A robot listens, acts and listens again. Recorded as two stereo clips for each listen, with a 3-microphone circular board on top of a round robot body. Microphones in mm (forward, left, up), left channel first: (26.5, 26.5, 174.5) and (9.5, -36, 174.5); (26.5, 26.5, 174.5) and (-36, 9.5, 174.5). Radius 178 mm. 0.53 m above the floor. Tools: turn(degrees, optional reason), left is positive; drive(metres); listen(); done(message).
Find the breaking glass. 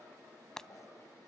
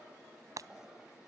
turn(degrees=160, reason="The breaking glass: 160° left.")
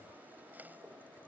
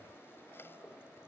done("Facing where the breaking glass came from. I can't hear it now.")